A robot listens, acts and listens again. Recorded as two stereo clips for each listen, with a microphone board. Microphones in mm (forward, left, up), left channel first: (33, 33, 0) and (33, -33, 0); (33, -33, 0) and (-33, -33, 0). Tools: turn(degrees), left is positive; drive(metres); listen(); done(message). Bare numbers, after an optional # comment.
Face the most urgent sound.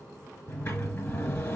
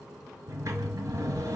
listen()
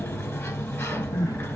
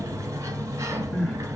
# The crying: 90° left.
turn(90)
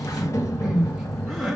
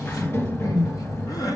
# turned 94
done("Facing the crying.")